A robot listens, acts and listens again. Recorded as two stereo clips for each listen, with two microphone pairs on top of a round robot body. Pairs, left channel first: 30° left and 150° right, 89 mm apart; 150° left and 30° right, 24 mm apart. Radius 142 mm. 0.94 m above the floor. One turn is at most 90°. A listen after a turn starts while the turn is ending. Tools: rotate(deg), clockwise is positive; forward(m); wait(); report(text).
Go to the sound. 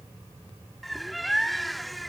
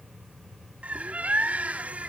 rotate(60)
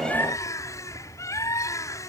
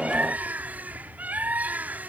rotate(25)
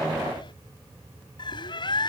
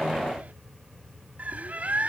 forward(1.0)
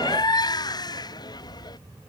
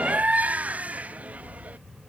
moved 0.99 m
rotate(10)
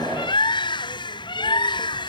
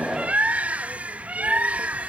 forward(1.0)
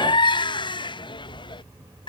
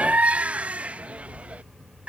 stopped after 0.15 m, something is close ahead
report("I am next to the bird.")